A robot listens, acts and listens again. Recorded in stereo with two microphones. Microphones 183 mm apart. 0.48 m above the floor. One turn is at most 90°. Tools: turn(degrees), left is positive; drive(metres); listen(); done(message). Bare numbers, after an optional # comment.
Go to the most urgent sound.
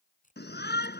turn(90)
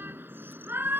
# So it is at 10° right.
turn(-10)
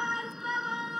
drive(1.0)
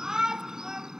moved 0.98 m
drive(1.0)
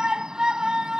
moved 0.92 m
drive(1.0)
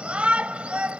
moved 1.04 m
# The shout is now 10° right.
turn(-10)
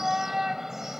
drive(1.0)
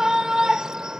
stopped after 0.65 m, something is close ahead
done("Arrived at the shout, straight ahead.")